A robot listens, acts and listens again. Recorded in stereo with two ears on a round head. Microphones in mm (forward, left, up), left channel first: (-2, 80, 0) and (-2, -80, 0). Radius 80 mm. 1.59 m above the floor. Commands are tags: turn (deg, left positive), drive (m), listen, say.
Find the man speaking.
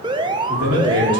<turn deg="-70"/>
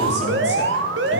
<listen/>
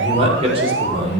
<turn deg="-35"/>
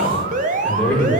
<turn deg="10"/>
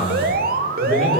<say>Found it: a man speaking, straight ahead, over 4 m away.</say>